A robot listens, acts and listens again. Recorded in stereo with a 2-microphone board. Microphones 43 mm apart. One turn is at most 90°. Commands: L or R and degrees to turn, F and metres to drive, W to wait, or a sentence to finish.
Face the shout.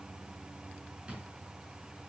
W
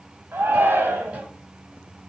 R70
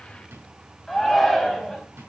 Found it: a shout, straight ahead.